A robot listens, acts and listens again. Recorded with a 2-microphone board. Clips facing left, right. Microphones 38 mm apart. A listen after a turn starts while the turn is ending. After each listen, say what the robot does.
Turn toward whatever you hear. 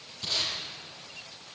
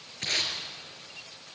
Turn 90° right.
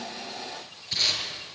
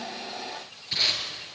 Turn 10° right.
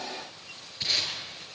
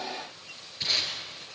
Found it: tape being pulled, straight ahead, over 4 m away.